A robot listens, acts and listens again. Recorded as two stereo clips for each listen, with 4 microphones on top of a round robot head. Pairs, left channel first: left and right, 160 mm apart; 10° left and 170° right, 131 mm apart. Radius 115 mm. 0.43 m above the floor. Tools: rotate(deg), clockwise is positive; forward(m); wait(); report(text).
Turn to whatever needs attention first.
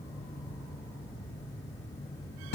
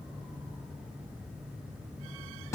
wait()
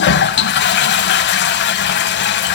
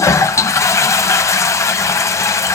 wait()
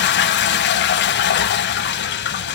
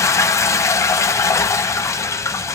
report("I can't make out anything urgent to turn to.")